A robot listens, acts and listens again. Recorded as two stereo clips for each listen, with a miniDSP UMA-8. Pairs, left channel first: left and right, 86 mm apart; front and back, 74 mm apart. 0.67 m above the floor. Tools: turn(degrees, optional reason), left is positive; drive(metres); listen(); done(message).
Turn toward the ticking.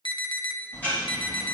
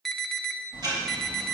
turn(degrees=160, reason="The ticking: 160° left.")
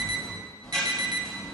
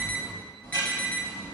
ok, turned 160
turn(degrees=10, reason="The ticking is now 10° left.")
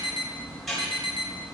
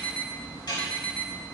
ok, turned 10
done("Found it: ticking, straight ahead.")